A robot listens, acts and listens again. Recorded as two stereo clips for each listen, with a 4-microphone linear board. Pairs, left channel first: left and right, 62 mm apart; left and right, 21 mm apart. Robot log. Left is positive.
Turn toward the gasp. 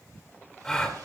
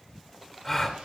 cmd yaw +30
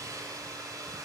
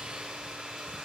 cmd idle
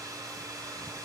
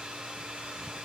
end: I heard a gasp, but can't make it out now. It was about 30° right or 150° left.